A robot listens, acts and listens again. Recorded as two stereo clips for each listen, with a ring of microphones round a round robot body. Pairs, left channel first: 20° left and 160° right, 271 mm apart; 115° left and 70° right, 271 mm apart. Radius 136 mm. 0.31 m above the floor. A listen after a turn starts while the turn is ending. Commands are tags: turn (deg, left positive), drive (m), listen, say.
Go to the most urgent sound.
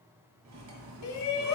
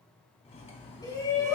<turn deg="40"/>
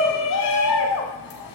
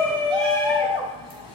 <drive m="1.0"/>
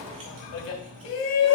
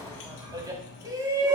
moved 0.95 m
<drive m="1.0"/>
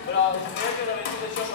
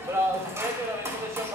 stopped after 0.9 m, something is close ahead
<say>I am next to the shout.</say>